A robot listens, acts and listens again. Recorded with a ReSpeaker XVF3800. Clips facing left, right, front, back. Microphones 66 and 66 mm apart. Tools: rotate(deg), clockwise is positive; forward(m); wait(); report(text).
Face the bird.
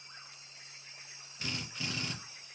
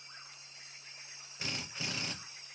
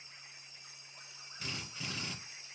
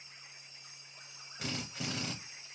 wait()
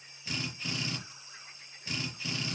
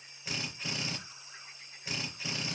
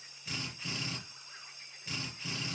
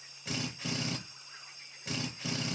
wait()
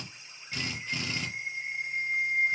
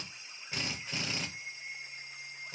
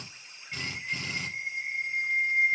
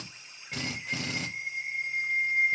rotate(-70)
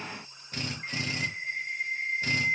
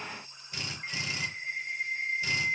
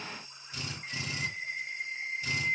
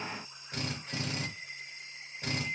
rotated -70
rotate(-10)
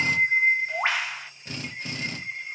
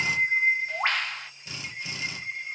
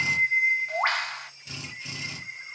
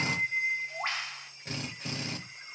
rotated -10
report("Facing the bird, under 1 m away.")